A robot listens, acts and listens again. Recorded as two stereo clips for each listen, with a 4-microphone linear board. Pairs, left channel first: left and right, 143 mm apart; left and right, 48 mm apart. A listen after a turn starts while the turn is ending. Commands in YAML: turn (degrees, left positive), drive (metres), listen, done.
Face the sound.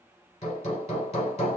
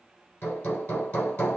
turn: 50
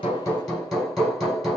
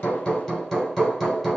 done: "Facing the hammering, 2 to 4 m away."